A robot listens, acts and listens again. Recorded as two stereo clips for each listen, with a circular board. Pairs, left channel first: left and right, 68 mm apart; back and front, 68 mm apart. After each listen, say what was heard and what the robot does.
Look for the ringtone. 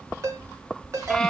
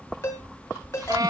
The ringtone: 135° right. Turn 135° right.
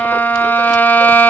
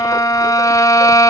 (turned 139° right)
Keep listening.
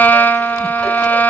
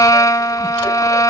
Keep listening.
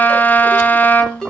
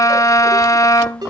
Found it: a ringtone, straight ahead.